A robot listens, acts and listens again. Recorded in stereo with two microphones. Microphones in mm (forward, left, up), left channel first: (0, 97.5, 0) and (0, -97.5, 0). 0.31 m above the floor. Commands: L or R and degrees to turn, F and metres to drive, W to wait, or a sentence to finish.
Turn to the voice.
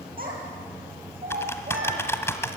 R50
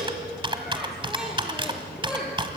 Facing the child speaking.